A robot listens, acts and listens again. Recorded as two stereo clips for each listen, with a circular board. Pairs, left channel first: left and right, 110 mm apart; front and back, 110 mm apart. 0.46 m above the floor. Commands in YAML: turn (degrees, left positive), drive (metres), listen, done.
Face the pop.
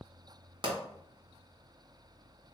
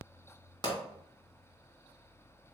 turn: -45
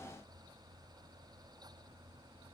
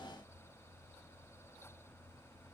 done: "I heard a pop from this way, but can't make it out now."